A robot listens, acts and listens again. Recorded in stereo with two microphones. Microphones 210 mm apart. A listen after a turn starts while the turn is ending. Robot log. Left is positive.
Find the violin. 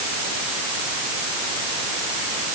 cmd idle
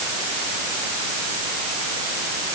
cmd idle
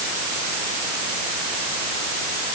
end: I can't make out a violin.